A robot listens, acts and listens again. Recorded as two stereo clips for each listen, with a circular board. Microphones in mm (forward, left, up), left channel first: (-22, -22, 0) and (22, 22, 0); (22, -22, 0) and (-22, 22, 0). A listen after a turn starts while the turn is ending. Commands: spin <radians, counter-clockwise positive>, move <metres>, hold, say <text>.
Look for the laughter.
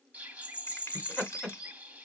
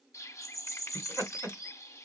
spin 2.71
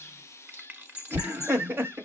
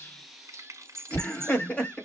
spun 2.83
spin 0.35
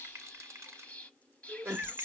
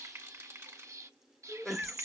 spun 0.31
spin 0.87
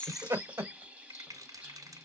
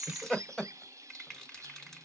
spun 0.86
spin 0.52
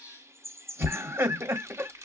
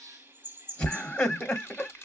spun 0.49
say Found it: laughter, straight ahead, 1 to 2 m away.